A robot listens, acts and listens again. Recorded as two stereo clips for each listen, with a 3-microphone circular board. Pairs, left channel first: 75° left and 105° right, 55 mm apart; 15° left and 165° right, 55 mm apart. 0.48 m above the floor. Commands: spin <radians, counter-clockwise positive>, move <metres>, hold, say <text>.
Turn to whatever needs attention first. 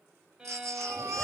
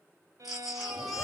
spin -1.40
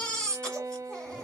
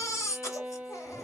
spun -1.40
say Found it: a baby crying, straight ahead, 1 to 2 m away.